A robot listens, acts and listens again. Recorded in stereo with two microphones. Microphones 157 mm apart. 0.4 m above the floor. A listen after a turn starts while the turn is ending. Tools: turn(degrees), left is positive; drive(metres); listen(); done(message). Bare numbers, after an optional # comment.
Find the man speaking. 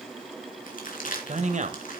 # The man speaking: about 55° right or 125° right.
turn(-55)
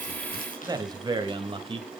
# So it is at 35° right.
turn(-35)
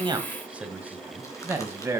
# The man speaking is now 15° right.
turn(-15)
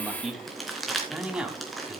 done("Found it: a man speaking, straight ahead, 2 to 4 m away.")